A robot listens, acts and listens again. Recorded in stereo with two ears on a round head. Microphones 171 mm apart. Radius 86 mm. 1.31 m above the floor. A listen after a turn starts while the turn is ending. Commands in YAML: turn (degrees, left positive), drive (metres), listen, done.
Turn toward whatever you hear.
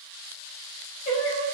turn: 45
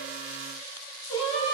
turn: 25
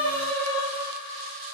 turn: 25
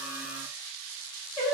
turn: 20
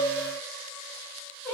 turn: 10
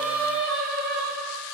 done: "Found it: singing, straight ahead."